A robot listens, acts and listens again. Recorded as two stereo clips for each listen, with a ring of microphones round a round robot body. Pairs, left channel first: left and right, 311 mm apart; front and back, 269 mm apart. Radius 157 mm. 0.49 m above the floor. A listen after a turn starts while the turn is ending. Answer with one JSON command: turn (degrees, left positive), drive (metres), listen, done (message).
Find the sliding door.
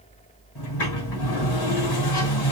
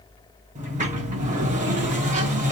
{"turn": 120}
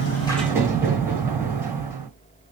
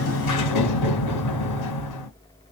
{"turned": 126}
{"turn": -10}
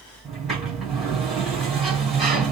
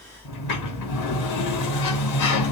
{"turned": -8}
{"done": "Facing the sliding door."}